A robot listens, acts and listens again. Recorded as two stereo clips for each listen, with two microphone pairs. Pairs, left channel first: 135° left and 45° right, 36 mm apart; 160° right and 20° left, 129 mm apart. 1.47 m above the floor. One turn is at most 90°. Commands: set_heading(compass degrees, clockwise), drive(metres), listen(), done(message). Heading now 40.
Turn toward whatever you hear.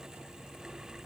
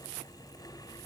listen()
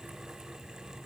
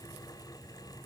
listen()
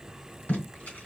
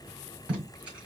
set_heading(310)
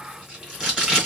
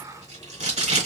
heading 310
set_heading(280)
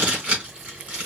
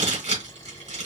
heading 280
set_heading(265)
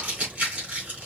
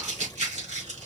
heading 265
done("Facing the tape being pulled.")